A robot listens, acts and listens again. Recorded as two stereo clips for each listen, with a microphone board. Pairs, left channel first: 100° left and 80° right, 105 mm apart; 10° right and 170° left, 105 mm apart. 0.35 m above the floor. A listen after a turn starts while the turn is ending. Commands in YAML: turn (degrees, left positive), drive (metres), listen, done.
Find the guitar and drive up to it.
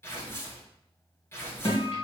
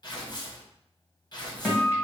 turn: 65
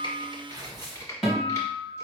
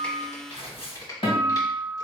drive: 1.0
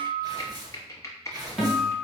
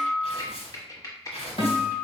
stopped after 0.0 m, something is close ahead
done: "Blocked. The guitar is further on, straight ahead."